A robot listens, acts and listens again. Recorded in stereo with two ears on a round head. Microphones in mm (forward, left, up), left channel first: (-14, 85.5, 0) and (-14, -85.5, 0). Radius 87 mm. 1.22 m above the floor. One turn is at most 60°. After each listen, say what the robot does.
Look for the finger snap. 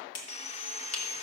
Turn 60° left.
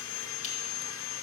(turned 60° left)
Turn 30° left.
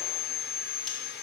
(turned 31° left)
Keep listening.
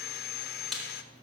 Found it: a finger snap, straight ahead.